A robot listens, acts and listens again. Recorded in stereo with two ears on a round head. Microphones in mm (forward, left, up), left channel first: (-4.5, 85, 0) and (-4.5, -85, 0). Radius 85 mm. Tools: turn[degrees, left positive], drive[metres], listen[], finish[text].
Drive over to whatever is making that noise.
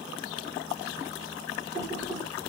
Action: turn[-30]
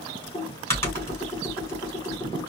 Thought: So it is at 15° left.
Action: turn[15]
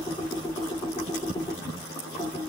Thought: The typing on a keyboard is now 10° left.
Action: turn[10]
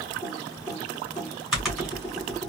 Action: drive[1.0]
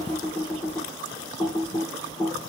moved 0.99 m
Action: drive[1.0]
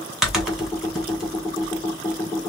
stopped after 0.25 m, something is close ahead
Action: finish[Arrived at the typing on a keyboard, straight ahead.]